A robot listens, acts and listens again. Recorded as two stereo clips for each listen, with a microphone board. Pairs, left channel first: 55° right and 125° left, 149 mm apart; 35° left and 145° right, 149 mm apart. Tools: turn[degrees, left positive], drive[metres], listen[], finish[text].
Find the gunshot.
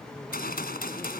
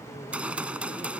Thought: The gunshot: 65° right.
Action: turn[-65]
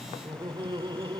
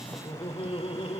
Action: finish[I heard a gunshot from this way, but can't make it out now.]